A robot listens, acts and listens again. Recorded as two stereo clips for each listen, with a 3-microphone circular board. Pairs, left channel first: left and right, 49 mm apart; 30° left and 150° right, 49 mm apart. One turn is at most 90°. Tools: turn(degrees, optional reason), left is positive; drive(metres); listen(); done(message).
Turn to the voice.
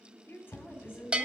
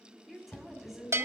turn(degrees=90, reason="The woman speaking: 120° left.")
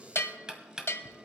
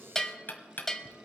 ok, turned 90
turn(degrees=30, reason="Nothing new. It was at 30° left.")
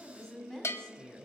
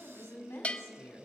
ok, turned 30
turn(degrees=10, reason="The woman speaking is now 10° left.")
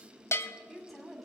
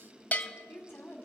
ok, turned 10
done("Found it: a woman speaking, straight ahead.")